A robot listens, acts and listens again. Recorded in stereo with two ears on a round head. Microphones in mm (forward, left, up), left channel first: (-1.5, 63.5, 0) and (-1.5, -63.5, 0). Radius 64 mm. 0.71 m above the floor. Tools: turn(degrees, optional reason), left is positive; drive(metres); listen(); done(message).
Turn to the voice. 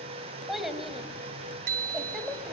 turn(degrees=30)
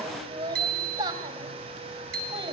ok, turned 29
turn(degrees=-30, reason="So it is at 30° right.")
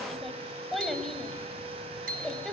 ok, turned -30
done("Found it: a child speaking, straight ahead, 2 to 4 m away.")